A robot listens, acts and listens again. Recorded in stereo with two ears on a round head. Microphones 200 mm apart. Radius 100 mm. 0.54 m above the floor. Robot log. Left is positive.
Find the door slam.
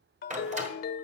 note: The door slam: about 35° right or 145° right.
cmd yaw -35
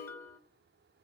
cmd idle
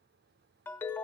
end: I heard a door slam, but can't make it out now. It was about straight ahead or 110° right.